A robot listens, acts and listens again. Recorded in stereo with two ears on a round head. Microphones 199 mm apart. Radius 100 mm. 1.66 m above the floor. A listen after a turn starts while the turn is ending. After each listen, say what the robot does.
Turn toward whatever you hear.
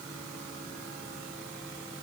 Keep listening.
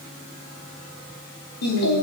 Turn 90° left.
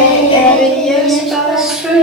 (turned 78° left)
Facing the singing.